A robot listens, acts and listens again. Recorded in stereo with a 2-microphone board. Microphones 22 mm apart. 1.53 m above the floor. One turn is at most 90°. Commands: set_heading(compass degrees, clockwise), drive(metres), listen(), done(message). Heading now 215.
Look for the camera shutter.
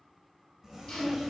listen()
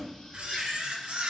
set_heading(275)
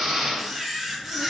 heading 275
set_heading(285)
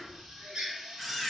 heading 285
done("Facing the camera shutter, 1 to 2 m away.")